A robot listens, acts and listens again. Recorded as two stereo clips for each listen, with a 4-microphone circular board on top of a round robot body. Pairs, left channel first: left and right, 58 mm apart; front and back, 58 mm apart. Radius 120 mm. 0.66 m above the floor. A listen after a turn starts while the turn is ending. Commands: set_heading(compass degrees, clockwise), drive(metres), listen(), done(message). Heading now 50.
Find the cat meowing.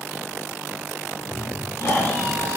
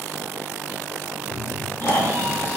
set_heading(150)
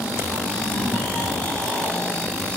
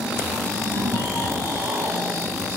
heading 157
listen()
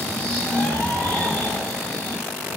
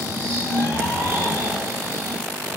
set_heading(122)
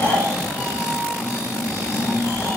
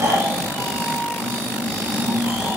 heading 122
listen()
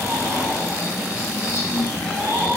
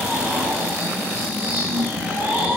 listen()
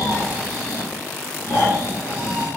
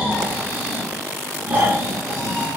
done("I heard a cat meowing from this way, but can't make it out now.")